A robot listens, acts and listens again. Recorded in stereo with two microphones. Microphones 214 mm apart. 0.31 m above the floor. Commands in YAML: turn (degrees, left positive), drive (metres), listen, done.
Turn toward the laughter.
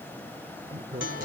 turn: -35
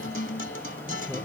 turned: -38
listen: true
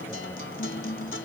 listen: true
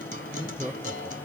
done: "Facing the laughter."